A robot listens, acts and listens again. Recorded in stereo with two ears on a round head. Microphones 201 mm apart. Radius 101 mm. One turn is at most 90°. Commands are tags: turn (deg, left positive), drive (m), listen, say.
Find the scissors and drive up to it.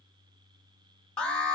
<listen/>
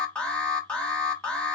<listen/>
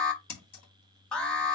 <turn deg="90"/>
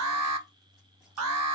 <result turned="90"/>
<listen/>
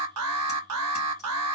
<listen/>
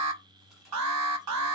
<say>I heard scissors from this way, but can't make it out now. I did not reach it.</say>